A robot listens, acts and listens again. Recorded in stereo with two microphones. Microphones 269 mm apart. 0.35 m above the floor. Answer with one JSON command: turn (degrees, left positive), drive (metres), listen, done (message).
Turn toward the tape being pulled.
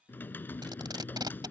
{"turn": -15}
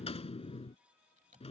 {"listen": true}
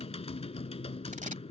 {"listen": true}
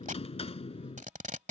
{"turn": -150}
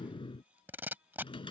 {"turn": -10}
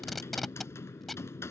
{"done": "Facing the tape being pulled."}